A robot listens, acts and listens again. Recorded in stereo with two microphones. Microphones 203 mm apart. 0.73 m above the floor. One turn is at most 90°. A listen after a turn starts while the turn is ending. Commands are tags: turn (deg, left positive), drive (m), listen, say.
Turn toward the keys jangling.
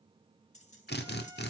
<turn deg="35"/>
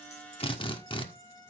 <listen/>
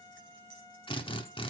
<listen/>
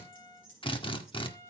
<turn deg="90"/>
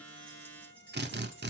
<turn deg="10"/>
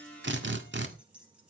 <say>Facing the keys jangling.</say>